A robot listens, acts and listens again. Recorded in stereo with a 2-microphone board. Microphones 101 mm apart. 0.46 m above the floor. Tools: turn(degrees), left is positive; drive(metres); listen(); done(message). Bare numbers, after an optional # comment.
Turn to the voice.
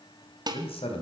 # The man speaking: about 70° left or 110° left.
turn(70)
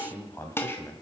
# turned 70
# So it is at 25° left.
turn(25)
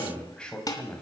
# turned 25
# The man speaking is now 10° left.
turn(10)
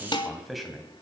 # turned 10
done("Facing the man speaking, 2 to 4 m away.")